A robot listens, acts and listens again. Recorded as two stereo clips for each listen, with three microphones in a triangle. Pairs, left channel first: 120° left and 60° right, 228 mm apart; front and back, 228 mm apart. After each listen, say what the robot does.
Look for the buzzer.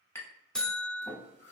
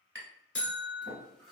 Turn 35° left.
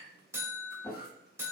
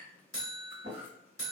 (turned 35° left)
Turn 20° left.
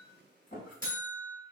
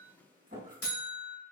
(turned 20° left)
Found it: a buzzer, straight ahead, 1 to 2 m away.